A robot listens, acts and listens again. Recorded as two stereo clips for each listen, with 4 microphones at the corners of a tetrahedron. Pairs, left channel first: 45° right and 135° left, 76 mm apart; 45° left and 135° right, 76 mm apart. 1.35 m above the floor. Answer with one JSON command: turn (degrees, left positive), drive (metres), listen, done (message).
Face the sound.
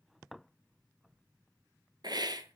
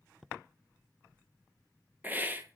{"turn": 160}
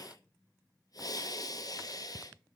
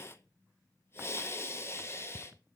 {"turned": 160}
{"turn": -10}
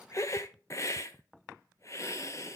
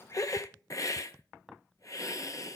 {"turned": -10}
{"done": "Found it: a hiss, straight ahead."}